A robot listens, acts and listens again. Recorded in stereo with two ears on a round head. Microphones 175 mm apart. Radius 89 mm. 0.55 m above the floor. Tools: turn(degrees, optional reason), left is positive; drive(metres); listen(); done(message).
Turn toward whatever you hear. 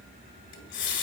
turn(degrees=70, reason="The running tap: about 70° left or 110° left.")
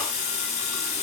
turn(degrees=35, reason="So it is at 35° left.")
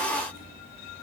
listen()
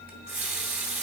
turn(degrees=-10, reason="The running tap is now 10° right.")
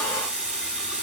done("Found it: a running tap, straight ahead.")